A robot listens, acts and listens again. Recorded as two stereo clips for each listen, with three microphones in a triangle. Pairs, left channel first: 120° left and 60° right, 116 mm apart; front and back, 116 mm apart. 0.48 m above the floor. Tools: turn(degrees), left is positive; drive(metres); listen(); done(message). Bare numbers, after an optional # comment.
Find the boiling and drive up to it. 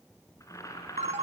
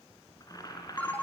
# The boiling: 55° left.
turn(55)
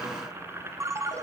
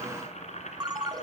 # The boiling is now 10° left.
turn(10)
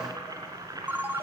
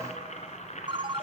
drive(1.0)
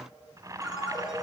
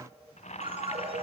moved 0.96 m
drive(1.0)
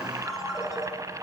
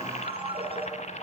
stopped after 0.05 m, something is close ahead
done("Arrived at the boiling, straight ahead.")